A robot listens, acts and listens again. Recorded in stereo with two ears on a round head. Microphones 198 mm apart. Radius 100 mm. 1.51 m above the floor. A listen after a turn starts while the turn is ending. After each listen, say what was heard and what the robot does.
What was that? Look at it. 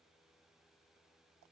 Keep listening.
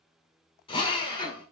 The drill: about 25° left or 155° left. Turn 25° left.
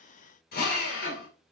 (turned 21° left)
So it is at 130° left. Turn 130° left.
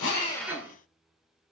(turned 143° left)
The drill is now 10° right. Turn 10° right.
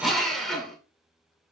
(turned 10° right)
Facing the drill, 2 to 4 m away.